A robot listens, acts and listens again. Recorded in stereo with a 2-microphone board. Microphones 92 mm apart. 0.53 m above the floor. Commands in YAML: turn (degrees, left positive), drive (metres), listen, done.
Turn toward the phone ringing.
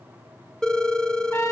turn: 30
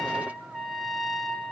listen: true
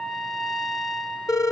turn: 145
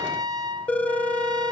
turn: 15
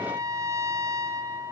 listen: true
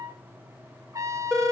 done: "Found it: a phone ringing, straight ahead, 1 to 2 m away."